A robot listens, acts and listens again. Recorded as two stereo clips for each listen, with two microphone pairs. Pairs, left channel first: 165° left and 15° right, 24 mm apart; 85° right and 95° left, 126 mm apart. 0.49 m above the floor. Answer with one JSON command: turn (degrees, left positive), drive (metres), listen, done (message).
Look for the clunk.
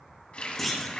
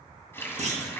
{"turn": 85}
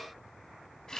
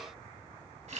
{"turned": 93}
{"turn": -10}
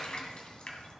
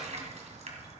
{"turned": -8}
{"done": "Facing where the clunk came from. I can't hear it now."}